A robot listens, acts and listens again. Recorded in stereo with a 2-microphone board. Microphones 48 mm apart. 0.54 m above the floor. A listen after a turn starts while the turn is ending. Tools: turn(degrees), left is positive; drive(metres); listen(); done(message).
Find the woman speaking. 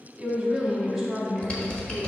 turn(degrees=30)
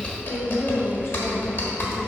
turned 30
turn(degrees=125)
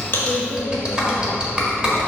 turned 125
listen()
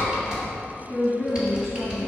turn(degrees=-60)
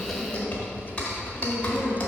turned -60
listen()
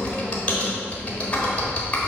listen()
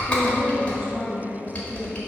turn(degrees=-15)
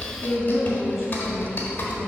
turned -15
done("Facing the woman speaking, 2 to 4 m away.")